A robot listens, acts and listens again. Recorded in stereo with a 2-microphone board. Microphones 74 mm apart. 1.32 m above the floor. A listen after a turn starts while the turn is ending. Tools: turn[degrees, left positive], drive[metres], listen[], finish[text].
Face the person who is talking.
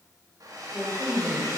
Action: turn[30]
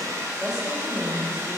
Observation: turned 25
Thought: So it is at 10° right.
Action: turn[-10]
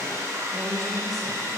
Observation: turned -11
Action: finish[Found it: a woman speaking, straight ahead.]